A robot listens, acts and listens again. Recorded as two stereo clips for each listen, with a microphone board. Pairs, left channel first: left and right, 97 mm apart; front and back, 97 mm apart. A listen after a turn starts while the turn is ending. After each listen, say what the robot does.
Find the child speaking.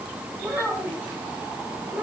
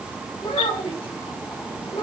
Turn 20° right.
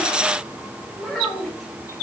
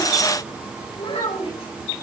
Facing the child speaking.